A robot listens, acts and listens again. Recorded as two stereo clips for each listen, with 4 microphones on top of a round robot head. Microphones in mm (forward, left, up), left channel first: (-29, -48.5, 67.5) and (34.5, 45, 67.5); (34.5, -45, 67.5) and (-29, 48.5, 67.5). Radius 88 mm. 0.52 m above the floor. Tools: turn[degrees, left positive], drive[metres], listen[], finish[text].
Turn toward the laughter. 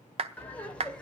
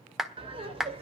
Thought: The laughter: 155° left.
Action: turn[155]
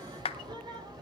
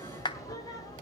Action: finish[Found it: laughter, straight ahead.]